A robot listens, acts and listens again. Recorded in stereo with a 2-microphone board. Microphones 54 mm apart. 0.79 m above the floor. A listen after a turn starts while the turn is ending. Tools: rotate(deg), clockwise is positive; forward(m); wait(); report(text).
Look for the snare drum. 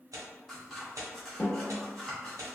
rotate(-30)
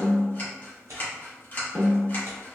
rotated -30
rotate(15)
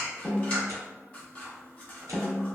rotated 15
report("Facing the snare drum, 1 to 2 m away.")